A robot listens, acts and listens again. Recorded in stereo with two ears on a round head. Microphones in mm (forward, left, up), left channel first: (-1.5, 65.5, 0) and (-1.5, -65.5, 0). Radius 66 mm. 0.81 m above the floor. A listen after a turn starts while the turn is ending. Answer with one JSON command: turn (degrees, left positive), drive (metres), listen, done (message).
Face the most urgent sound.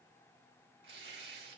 {"listen": true}
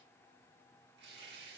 {"listen": true}
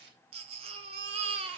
{"turn": -40}
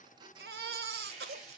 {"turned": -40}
{"turn": -95}
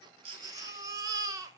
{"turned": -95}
{"turn": -25}
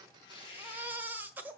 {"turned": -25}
{"turn": -10}
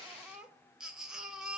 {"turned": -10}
{"done": "Found it: a baby crying, straight ahead."}